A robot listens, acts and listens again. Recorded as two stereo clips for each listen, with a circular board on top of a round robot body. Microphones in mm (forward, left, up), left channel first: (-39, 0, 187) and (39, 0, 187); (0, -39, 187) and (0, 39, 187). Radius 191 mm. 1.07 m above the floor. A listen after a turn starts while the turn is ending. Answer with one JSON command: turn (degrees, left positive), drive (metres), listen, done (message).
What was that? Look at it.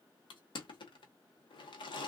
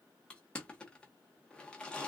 {"turn": -165}
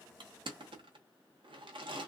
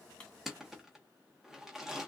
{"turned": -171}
{"done": "Found it: crushing, straight ahead, under 1 m away."}